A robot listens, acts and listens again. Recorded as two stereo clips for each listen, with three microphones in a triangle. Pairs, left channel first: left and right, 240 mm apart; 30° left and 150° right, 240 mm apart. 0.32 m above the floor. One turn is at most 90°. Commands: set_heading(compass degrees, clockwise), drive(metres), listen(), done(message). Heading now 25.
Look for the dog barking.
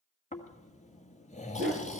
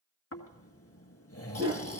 set_heading(115)
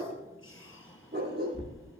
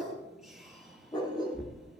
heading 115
set_heading(160)
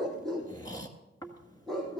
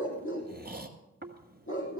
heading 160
done("Found it: a dog barking, straight ahead.")